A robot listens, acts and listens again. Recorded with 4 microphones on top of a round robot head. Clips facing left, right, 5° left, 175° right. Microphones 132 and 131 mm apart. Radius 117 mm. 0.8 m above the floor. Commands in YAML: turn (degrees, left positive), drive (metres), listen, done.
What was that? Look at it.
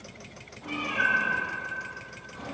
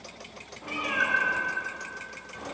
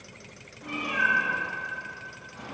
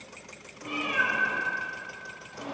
turn: 180
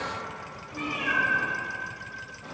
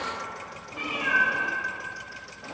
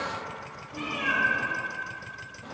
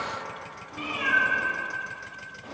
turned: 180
turn: -25
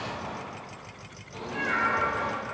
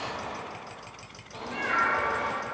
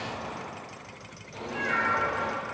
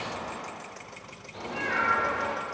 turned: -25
done: "Facing the cat meowing."